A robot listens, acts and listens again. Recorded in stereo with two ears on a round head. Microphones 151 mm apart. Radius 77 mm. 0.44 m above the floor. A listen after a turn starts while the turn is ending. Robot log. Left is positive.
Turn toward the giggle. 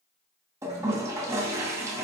cmd idle
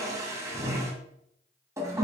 cmd idle
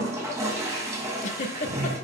note: The giggle: about 45° left or 135° left.
cmd yaw +45
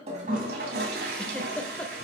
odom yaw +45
note: So it is at 10° left.
cmd yaw +10
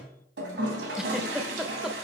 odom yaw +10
end: Facing the giggle, under 1 m away.